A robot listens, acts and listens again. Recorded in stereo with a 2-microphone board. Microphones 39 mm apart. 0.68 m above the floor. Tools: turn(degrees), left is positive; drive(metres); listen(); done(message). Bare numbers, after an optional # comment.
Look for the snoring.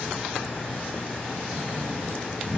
# The snoring: about 50° right or 130° right.
turn(-50)
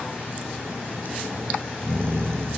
# So it is at 75° right.
turn(-75)
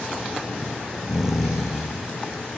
# The snoring is now 10° right.
turn(-10)
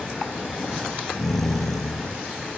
done("Facing the snoring.")